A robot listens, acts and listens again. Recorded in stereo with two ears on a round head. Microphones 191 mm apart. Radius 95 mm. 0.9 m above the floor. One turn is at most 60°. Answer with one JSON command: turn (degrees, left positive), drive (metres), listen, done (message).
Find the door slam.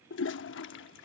{"listen": true}
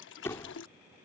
{"turn": 30}
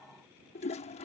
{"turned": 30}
{"listen": true}
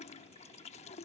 {"done": "I heard a door slam, but can't make it out now. It was about 15° right or 135° left."}